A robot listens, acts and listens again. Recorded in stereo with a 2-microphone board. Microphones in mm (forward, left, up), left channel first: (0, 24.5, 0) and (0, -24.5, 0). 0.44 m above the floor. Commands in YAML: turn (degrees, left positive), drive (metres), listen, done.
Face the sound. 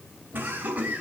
turn: -35
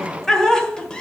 turn: 10
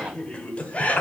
turn: 30
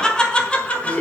turn: 25
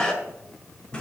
turn: 20
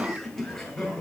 done: "Found it: laughter, straight ahead, 2 to 4 m away."